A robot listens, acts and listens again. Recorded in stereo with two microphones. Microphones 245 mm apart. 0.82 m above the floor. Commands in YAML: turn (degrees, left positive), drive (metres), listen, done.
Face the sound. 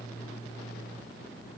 listen: true
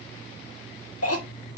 turn: 70
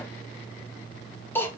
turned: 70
turn: 10
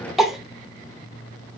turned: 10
done: "Found it: a cough, straight ahead, 1 to 2 m away."